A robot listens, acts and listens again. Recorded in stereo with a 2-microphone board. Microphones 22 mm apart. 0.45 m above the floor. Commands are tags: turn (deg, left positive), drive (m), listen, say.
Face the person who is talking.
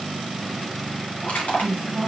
<turn deg="35"/>
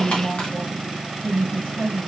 <turn deg="105"/>
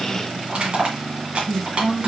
<turn deg="-10"/>
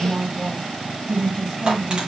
<say>Facing the woman speaking.</say>